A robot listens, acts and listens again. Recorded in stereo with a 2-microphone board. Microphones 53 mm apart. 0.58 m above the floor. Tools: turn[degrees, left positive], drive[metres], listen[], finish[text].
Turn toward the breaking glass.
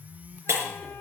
Thought: The breaking glass: about 65° right or 115° right.
Action: turn[-65]
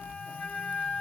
Action: listen[]
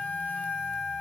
Action: finish[I heard breaking glass, but can't make it out now. It was about straight ahead or 50° right.]